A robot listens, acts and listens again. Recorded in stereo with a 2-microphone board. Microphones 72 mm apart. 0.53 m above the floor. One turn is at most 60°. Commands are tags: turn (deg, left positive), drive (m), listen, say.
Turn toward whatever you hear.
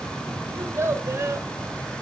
<turn deg="-40"/>
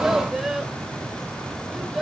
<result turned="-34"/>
<say>Facing the child speaking, 1 to 2 m away.</say>